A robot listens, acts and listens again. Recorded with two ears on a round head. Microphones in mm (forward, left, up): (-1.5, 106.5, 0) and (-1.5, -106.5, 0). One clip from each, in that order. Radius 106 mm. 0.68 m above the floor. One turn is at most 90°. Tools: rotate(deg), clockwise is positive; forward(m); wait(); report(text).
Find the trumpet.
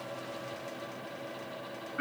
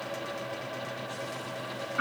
wait()
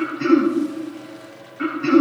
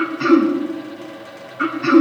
wait()
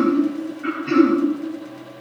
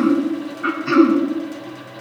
report("I can't make out a trumpet to turn to.")